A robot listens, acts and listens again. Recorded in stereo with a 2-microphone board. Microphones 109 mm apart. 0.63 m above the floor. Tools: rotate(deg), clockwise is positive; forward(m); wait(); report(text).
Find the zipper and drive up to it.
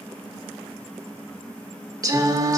wait()
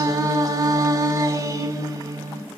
wait()
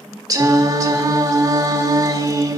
report("I can't make out a zipper, only singing.")